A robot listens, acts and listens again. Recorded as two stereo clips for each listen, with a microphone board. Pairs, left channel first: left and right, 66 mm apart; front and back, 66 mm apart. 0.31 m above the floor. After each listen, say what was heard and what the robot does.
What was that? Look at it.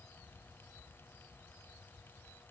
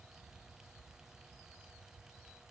Keep listening.
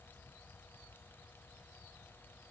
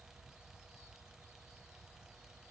Keep listening.
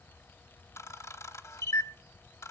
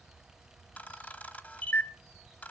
The camera shutter: 60° left. Turn 60° left.
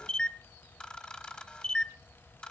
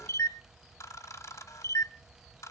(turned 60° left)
The camera shutter is now 15° left. Turn 15° left.
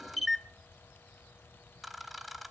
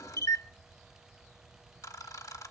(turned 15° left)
Found it: a camera shutter, straight ahead, 1 to 2 m away.